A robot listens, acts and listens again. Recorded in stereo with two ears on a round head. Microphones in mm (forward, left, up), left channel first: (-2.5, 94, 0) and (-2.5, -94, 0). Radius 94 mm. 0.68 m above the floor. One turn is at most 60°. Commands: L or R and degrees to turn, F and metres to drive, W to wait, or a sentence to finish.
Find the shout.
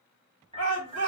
R60
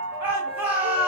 R10
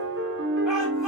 W
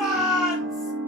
Facing the shout, 1 to 2 m away.